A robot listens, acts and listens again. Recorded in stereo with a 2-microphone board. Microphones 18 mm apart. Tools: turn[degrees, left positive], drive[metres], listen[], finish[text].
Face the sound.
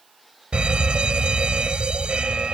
Thought: The fire alarm: about 70° right or 110° right.
Action: turn[-70]
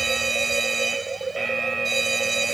Action: finish[Facing the fire alarm.]